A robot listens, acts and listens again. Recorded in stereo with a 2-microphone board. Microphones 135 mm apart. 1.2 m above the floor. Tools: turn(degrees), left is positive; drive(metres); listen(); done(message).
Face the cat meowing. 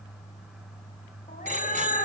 turn(degrees=65)
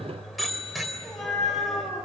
done("Facing the cat meowing, over 4 m away.")